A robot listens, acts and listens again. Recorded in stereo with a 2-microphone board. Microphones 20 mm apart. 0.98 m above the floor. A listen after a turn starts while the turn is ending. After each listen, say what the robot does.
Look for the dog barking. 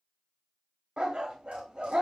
Turn 50° right.
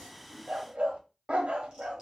Turn 70° right.
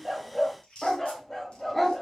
Turn 20° left.
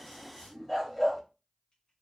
Found it: a dog barking, straight ahead, under 1 m away.